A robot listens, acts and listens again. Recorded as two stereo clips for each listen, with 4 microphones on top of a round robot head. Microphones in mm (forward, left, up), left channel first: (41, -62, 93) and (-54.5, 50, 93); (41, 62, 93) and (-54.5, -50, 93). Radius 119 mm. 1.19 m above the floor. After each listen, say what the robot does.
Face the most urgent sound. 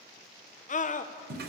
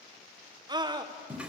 Turn 75° right.
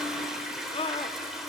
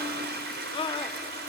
Facing the scream.